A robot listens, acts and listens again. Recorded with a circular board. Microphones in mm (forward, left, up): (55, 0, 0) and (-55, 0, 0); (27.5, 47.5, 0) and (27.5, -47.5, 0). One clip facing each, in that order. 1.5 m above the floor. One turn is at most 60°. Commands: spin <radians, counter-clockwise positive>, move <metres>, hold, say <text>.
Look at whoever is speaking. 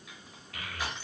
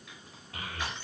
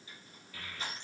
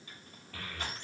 spin -1.05
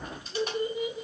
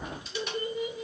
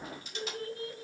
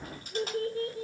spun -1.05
spin -1.05
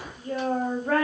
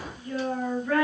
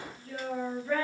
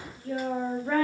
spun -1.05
spin -0.79
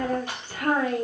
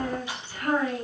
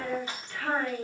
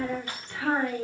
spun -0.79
spin -0.17
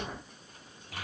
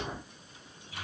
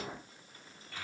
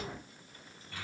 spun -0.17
say Found it: a child speaking, straight ahead, 1 to 2 m away.